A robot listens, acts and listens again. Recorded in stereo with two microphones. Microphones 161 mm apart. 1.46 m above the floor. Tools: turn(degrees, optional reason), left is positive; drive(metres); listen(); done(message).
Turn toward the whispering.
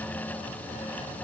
listen()
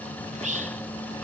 turn(degrees=-50, reason="The whispering: about 50° right or 130° right.")
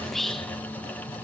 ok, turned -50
done("Found it: whispering, straight ahead, 1 to 2 m away.")